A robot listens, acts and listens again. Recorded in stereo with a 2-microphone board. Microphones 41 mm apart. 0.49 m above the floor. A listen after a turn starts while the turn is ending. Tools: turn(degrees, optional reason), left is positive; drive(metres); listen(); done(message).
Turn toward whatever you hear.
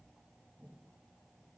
listen()
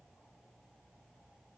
listen()
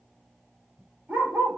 turn(degrees=-65, reason="The dog barking: about 65° right or 115° right.")
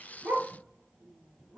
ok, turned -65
listen()
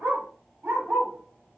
turn(degrees=-55, reason="So it is at 55° right.")
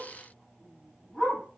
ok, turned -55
turn(degrees=-10, reason="The dog barking is now 10° right.")
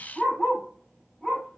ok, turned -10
done("Found it: a dog barking, straight ahead, over 4 m away.")